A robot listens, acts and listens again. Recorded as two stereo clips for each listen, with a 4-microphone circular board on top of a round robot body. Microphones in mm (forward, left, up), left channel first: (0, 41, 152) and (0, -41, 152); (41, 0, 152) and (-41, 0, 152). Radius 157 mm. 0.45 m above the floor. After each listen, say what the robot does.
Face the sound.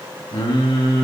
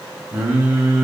Turn 105° left.
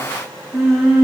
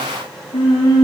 Found it: singing, straight ahead.